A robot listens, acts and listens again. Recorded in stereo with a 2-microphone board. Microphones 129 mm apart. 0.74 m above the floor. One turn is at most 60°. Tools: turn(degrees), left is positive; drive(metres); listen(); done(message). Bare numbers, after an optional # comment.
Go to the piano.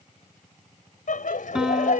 turn(-30)
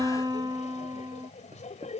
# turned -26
# So it is at 150° right.
turn(-60)
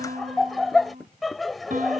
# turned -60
# The piano is now 90° right.
turn(-60)
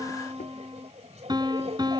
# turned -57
# The piano is now 35° right.
turn(-35)
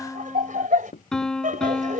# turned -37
drive(1.0)
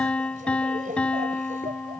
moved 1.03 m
drive(1.0)
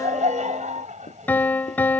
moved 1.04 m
# The piano is now 15° left.
turn(15)
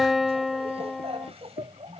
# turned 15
drive(1.0)
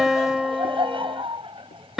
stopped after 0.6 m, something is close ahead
done("I am next to the piano.")